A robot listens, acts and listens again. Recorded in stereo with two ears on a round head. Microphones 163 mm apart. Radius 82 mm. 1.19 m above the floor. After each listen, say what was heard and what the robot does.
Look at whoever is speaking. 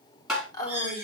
The woman speaking: about 20° left or 160° left. Turn 20° left.
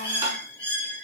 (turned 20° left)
Keep listening.
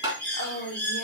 So it is at 140° left. Turn 140° left.
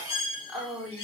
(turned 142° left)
Found it: a woman speaking, straight ahead.